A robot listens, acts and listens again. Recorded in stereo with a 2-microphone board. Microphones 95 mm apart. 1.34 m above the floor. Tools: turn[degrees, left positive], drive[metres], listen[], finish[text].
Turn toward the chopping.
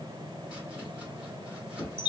Action: turn[-30]
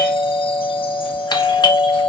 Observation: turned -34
Action: listen[]
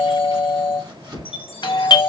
Thought: So it is at 135° right.
Action: turn[-135]
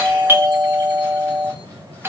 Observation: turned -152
Thought: Nothing new. It was at 20° left.
Action: turn[20]
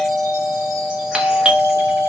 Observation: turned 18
Action: listen[]
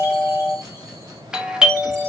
Action: finish[Facing where the chopping came from. I can't hear it now.]